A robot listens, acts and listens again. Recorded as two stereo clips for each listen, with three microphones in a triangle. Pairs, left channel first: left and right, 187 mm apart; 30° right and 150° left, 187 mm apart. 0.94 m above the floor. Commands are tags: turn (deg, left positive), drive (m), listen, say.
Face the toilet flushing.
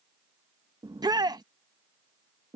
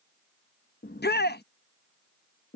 <listen/>
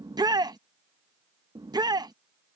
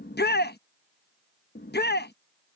<listen/>
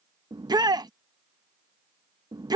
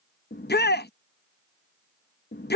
<say>I can't make out a toilet flushing to turn to.</say>